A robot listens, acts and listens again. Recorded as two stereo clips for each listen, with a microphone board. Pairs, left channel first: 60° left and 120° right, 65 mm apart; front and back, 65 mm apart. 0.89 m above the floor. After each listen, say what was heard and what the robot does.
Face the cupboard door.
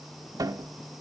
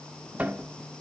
The cupboard door: 115° right. Turn 115° right.
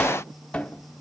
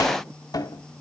The cupboard door is now 10° right. Turn 10° right.
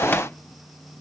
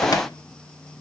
Facing the cupboard door, 1 to 2 m away.